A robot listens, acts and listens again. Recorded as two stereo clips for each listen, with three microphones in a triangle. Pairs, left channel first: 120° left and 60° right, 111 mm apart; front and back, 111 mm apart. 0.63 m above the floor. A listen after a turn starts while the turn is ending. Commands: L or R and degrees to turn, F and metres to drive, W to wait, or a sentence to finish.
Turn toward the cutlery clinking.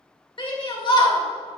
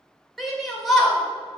W
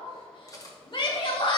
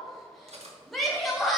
L175
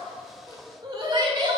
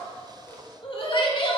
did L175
W
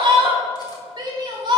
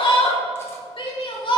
W
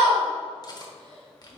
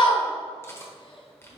L65
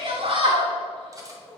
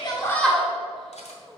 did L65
Facing the cutlery clinking.